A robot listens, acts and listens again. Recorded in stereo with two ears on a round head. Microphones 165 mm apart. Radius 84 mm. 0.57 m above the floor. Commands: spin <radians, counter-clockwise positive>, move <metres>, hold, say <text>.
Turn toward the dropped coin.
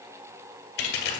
spin 1.22
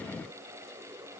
hold
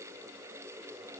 say I heard a dropped coin, but can't make it out now. It was about straight ahead or 40° left.